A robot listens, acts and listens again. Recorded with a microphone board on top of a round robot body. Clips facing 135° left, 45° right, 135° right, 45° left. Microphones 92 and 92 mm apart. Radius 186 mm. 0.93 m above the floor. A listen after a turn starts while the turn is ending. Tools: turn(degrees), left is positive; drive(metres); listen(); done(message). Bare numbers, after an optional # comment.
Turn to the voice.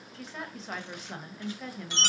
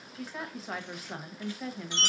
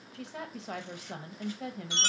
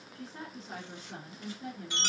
# The woman speaking: 130° right.
turn(-130)
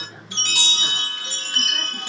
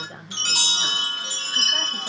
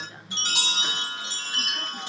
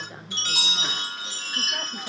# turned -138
# Nothing new. It was at 10° left.
turn(10)
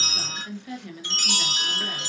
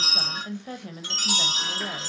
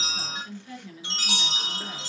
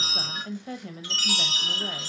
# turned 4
done("Facing the woman speaking.")